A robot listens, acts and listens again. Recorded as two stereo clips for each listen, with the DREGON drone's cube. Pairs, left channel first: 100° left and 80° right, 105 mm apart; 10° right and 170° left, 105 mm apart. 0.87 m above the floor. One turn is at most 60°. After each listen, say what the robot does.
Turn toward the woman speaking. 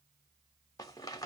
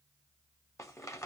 Keep listening.
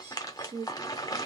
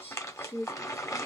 Turn 35° right.
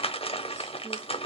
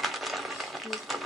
Keep listening.
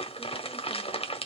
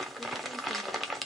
Keep listening.
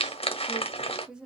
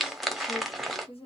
Facing the woman speaking.